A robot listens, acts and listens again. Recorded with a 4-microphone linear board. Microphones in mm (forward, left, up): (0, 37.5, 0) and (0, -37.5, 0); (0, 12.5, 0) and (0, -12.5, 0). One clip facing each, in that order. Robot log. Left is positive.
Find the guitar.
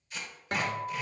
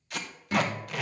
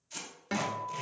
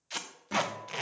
note: The guitar: about 45° left or 135° left.
cmd yaw +45
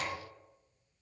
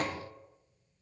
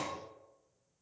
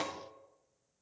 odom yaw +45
cmd idle
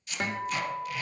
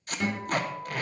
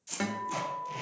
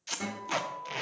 note: So it is at 90° left.
cmd yaw +90
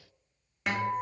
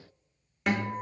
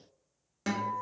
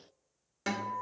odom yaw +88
end: Found it: a guitar, straight ahead, 1 to 2 m away.